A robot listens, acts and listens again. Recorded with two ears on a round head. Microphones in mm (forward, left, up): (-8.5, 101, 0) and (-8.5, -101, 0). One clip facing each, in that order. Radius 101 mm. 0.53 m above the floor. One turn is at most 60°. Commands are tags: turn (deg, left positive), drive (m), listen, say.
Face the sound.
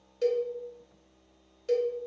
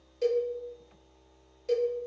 <turn deg="30"/>
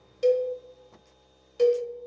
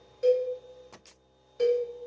<turn deg="60"/>
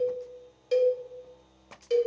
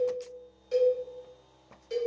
<turn deg="60"/>
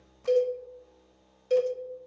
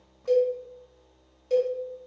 <turn deg="20"/>
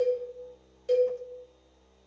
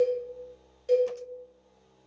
<say>Facing the cowbell, under 1 m away.</say>